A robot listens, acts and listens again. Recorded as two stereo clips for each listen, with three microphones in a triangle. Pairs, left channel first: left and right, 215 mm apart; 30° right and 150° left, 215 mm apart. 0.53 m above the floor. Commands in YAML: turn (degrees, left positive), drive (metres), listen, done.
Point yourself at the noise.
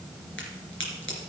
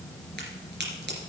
turn: 115
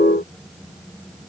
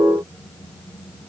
done: "I heard a crack from this way, but can't make it out now."